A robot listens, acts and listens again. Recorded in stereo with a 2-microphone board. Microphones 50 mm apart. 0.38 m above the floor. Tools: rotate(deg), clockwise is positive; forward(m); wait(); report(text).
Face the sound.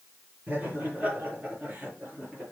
rotate(25)
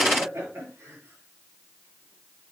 rotate(125)
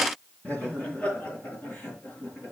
rotate(-25)
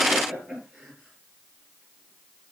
rotate(15)
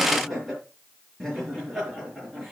report("Found it: laughter, straight ahead.")